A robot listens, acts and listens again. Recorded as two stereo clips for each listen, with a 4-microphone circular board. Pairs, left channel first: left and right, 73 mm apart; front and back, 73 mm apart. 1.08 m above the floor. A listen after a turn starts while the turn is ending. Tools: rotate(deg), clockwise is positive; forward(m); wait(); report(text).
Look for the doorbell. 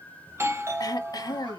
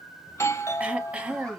rotate(45)
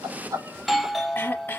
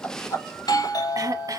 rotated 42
report("Facing the doorbell, 1 to 2 m away.")